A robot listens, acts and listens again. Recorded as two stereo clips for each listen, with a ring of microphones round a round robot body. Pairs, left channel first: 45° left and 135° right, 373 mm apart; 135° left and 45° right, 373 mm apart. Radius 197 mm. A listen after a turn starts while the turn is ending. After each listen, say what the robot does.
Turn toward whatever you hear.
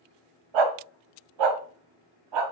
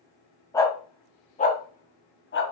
Turn 165° right.
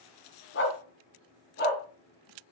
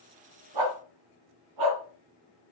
Turn 20° right.
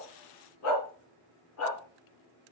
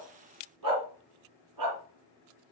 Facing the dog barking, 2 to 4 m away.